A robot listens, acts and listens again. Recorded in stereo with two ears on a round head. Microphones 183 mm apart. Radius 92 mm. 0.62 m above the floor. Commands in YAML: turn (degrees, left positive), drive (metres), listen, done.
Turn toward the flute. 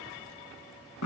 listen: true
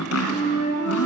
turn: 35
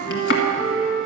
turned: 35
turn: 105
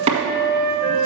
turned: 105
turn: 15
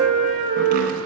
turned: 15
done: "Found it: a flute, straight ahead, 2 to 4 m away."